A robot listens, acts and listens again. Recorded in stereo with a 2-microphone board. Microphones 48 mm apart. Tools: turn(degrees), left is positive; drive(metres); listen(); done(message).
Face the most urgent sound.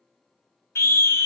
turn(degrees=60)
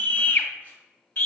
turn(degrees=50)
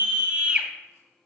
turn(degrees=-25)
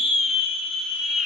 done("Facing the scream.")